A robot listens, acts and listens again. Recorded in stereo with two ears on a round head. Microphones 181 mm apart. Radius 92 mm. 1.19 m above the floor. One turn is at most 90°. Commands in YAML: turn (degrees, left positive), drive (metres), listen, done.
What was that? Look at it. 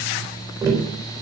turn: -30
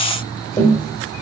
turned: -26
turn: 15
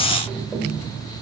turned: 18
done: "Facing the tapping, 2 to 4 m away."